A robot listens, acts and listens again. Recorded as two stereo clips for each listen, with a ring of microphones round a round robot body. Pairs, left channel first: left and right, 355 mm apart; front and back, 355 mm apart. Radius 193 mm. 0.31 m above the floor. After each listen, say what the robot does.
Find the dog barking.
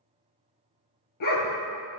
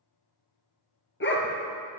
Turn 60° left.
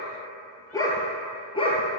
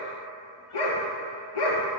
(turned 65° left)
Turn 15° left.
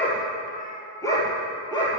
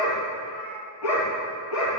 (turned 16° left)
Turn 15° left.
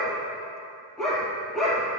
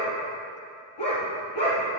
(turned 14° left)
Found it: a dog barking, straight ahead.